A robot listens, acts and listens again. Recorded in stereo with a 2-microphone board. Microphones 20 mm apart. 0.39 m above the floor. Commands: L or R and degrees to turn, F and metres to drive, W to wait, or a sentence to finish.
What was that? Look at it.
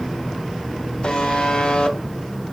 L50
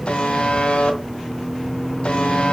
L70
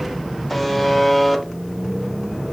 Found it: a buzzer, straight ahead.